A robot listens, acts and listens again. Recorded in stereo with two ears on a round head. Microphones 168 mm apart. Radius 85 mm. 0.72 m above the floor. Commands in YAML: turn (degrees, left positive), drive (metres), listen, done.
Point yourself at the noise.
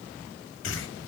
turn: 90
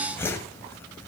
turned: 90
turn: 15
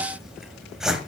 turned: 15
done: "Facing the whoosh."